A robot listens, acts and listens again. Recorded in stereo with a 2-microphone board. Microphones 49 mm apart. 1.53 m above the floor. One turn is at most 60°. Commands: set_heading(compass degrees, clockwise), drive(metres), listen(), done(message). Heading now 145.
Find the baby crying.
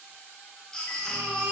set_heading(115)
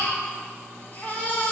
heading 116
set_heading(56)
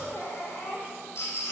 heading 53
set_heading(353)
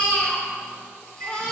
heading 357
set_heading(337)
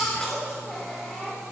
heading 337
done("Found it: a baby crying, straight ahead, 2 to 4 m away.")